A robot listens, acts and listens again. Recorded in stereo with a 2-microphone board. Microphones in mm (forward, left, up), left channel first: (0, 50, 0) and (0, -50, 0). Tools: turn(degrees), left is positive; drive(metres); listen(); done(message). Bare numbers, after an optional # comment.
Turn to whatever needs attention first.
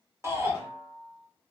# The shout: about 25° right or 155° right.
turn(-25)
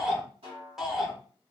done("Found it: a shout, straight ahead, 1 to 2 m away.")